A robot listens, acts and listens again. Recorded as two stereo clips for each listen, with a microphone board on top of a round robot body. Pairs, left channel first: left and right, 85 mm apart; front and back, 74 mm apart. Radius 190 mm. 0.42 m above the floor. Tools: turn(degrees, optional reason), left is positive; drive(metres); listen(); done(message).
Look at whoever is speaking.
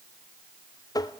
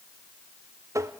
listen()
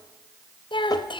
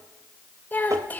turn(degrees=65, reason="The child speaking: 65° left.")
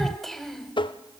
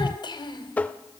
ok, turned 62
done("Found it: a child speaking, straight ahead, 2 to 4 m away.")